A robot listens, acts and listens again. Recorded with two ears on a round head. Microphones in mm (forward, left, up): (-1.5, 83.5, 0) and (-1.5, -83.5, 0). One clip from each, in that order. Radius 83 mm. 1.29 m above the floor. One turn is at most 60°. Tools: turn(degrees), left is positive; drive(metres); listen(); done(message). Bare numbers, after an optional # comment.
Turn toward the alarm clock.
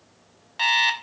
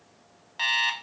turn(30)
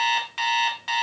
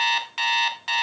# So it is at 20° right.
turn(-20)
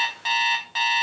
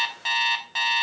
# The alarm clock is now 10° right.
turn(-10)
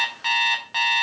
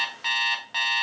done("Found it: an alarm clock, straight ahead, 1 to 2 m away.")